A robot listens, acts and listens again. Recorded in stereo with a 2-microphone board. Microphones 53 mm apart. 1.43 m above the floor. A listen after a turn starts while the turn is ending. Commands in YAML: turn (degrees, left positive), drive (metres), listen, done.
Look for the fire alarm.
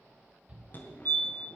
turn: 35
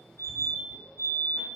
turn: 105
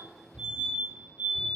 turn: -25
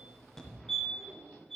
turn: 10
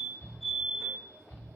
done: "Facing the fire alarm, 1 to 2 m away."